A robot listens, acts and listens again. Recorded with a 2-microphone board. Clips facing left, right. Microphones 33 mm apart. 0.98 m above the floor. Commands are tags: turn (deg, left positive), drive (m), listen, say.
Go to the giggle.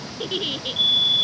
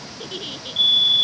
<turn deg="30"/>
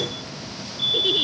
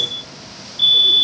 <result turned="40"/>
<listen/>
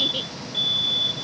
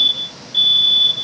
<listen/>
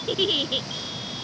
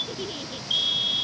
<turn deg="110"/>
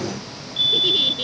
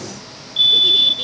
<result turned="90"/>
<turn deg="20"/>
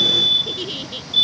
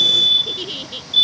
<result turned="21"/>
<drive m="1.0"/>
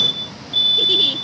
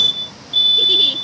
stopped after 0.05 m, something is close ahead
<listen/>
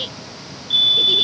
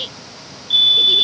<say>Blocked. The giggle is further on, straight ahead.</say>